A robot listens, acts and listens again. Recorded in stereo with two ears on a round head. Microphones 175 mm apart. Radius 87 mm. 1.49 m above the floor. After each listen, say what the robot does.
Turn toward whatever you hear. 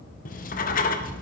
Turn 45° left.
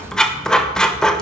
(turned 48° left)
Found it: writing, straight ahead.